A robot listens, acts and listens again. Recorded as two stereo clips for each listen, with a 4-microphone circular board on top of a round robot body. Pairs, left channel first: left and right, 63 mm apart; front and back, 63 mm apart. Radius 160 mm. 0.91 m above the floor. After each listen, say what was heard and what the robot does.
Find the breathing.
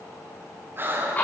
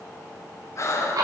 The breathing: 40° right. Turn 40° right.
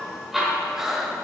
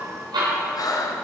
The breathing is now 10° right. Turn 10° right.
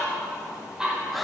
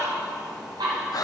Facing the breathing, under 1 m away.